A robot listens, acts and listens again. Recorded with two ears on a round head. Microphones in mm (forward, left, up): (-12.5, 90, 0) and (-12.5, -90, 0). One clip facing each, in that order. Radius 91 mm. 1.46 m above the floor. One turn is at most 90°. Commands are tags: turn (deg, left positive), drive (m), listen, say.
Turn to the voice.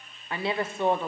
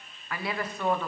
<turn deg="25"/>
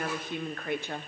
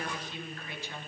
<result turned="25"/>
<turn deg="90"/>
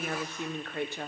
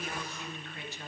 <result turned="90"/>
<turn deg="45"/>
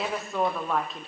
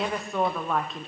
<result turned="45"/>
<say>Facing the woman speaking.</say>